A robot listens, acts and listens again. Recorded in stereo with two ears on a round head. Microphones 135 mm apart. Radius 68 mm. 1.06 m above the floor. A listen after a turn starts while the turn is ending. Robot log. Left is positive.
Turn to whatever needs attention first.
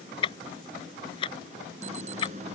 note: The alarm: about 45° right or 135° right.
cmd yaw -45
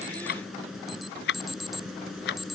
end: Found it: an alarm, straight ahead.